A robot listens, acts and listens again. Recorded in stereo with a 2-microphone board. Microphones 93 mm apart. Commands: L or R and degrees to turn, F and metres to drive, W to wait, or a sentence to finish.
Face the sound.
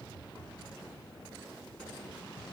W
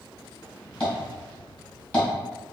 L30
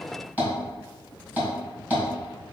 R15
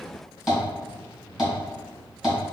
Found it: tapping, straight ahead, 1 to 2 m away.